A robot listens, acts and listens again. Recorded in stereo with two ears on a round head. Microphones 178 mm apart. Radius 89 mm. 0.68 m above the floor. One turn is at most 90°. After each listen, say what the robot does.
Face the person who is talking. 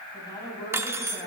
Turn 20° left.
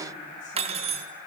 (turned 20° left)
Keep listening.
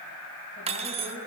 Turn 90° left.
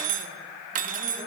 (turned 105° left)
Turn 35° left.
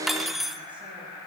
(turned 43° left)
Turn 10° right.
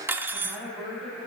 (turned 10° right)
Facing the woman speaking.